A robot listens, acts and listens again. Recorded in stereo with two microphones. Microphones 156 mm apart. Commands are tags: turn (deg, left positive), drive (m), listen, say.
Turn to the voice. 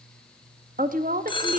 <turn deg="-65"/>
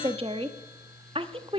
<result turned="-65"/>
<turn deg="-40"/>
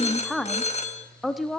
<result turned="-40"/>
<say>Found it: a woman speaking, straight ahead, 1 to 2 m away.</say>